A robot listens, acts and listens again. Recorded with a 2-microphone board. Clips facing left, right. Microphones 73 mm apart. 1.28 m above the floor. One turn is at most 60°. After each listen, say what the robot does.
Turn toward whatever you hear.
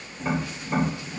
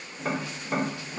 Turn 45° right.
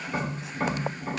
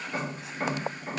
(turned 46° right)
Facing the tapping, 1 to 2 m away.